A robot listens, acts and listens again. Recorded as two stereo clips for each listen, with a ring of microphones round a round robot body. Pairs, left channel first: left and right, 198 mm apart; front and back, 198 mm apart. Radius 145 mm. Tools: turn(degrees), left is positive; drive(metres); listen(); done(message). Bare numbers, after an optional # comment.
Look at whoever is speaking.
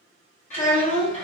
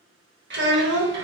# The child speaking: 150° left.
turn(150)
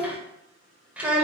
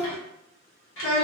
done("Facing the child speaking.")